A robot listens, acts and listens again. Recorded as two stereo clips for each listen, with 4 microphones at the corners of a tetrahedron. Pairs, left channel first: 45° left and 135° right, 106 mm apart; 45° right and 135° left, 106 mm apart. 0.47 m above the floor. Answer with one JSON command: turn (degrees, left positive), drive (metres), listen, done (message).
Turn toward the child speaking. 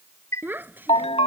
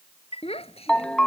{"turn": -65}
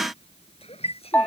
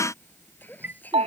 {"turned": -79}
{"turn": 30}
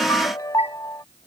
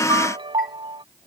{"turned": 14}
{"turn": 15}
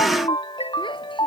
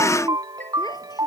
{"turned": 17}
{"listen": true}
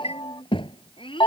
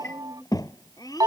{"turn": 10}
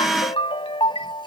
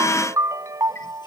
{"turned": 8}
{"listen": true}
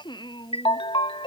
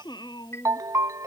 {"done": "Found it: a child speaking, straight ahead."}